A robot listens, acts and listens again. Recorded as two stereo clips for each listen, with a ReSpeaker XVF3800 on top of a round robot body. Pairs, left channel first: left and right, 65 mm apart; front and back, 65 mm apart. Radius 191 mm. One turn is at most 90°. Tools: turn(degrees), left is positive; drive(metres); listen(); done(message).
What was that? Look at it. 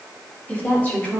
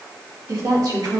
turn(degrees=90)
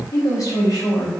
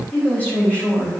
turn(degrees=70)
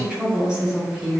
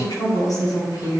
turn(degrees=-10)
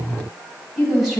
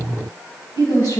done("Facing the woman speaking.")